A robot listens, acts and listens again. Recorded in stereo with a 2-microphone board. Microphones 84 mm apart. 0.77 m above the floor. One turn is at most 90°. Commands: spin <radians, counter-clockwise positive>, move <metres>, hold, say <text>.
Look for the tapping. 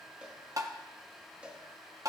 spin -0.79
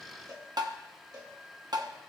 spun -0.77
spin -1.40
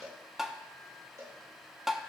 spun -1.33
say Facing the tapping, under 1 m away.